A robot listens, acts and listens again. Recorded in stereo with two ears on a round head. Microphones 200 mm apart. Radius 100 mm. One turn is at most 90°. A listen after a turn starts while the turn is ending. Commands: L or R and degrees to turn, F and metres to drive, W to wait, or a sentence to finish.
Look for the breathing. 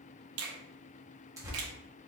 W
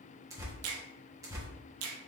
W
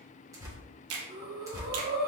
R45
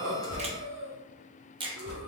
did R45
R80
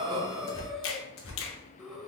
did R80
Found it: breathing, straight ahead, under 1 m away.